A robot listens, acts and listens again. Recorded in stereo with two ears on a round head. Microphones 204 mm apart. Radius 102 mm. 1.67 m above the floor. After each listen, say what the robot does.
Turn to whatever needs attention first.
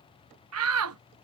Turn 70° right.
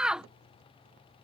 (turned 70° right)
Found it: a shout, straight ahead.